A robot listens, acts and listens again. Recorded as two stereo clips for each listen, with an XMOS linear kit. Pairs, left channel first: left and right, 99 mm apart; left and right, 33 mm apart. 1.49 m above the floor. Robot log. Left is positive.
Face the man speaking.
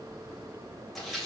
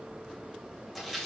cmd idle
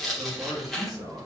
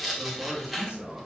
note: The man speaking: about 40° right or 140° right.
cmd yaw -40
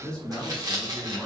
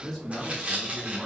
note: So it is at 15° left.
cmd yaw +15
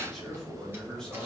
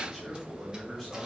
note: The man speaking is now 10° left.
cmd yaw +10
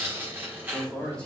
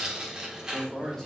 note: The man speaking is now 10° left.
cmd yaw +10
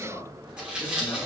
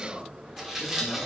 end: Facing the man speaking.